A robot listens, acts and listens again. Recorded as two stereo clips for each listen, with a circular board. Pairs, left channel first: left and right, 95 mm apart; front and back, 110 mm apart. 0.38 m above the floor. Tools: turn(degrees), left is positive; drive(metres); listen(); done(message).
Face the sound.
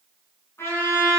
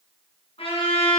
turn(degrees=25)
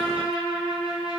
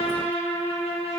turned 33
turn(degrees=-10)
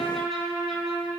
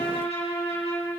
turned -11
done("Facing the trumpet.")